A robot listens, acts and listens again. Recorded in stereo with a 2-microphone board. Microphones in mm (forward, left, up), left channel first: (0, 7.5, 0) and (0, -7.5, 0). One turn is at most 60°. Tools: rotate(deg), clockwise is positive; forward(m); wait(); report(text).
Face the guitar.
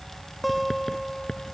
rotate(-30)
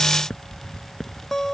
rotate(-60)
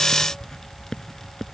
rotate(-60)
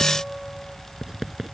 rotate(-25)
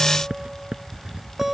rotate(20)
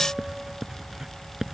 wait()
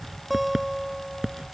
report("Found it: a guitar, straight ahead.")